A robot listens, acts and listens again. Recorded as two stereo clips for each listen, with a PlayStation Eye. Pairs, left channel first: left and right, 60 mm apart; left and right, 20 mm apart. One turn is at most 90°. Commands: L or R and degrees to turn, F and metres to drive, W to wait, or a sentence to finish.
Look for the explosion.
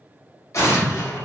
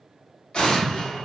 L60
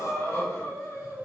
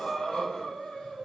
W
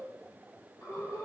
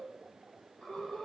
I heard an explosion, but can't make it out now. It was about straight ahead or 60° left.